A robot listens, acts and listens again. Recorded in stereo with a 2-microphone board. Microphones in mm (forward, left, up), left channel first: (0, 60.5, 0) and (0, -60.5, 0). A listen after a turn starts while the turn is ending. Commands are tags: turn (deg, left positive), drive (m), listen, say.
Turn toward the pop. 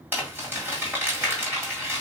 <listen/>
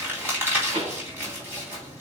<turn deg="-90"/>
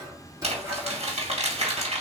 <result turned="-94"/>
<say>Facing where the pop came from. I can't hear it now.</say>